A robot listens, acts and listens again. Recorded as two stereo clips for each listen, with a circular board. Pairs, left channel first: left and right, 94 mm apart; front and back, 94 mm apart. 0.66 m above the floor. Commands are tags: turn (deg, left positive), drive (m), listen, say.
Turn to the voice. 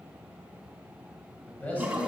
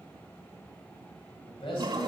<turn deg="15"/>
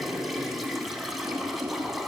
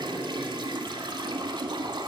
<listen/>
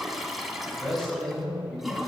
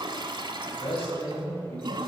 <say>Found it: a man speaking, straight ahead, 2 to 4 m away.</say>